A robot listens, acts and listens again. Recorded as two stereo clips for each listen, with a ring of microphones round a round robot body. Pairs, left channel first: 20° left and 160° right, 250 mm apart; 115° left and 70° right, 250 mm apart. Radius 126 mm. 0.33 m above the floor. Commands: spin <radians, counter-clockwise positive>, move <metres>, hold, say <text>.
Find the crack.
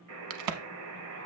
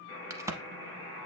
spin -2.53
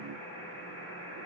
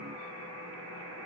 say Facing where the crack came from. I can't hear it now.